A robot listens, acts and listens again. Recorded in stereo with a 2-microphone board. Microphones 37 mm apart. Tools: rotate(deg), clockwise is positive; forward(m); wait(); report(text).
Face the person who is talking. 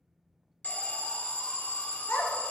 rotate(-70)
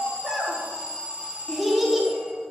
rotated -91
report("Found it: a child speaking, straight ahead, 1 to 2 m away.")